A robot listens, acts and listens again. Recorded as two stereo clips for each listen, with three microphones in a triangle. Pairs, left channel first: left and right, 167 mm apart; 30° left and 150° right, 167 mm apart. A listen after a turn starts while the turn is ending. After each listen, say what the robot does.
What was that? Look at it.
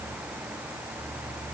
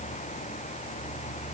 Keep listening.
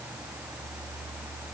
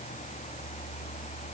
Keep listening.
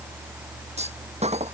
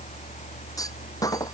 Turn 40° right.
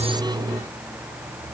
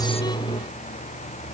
Facing where the clunk came from. I can't hear it now.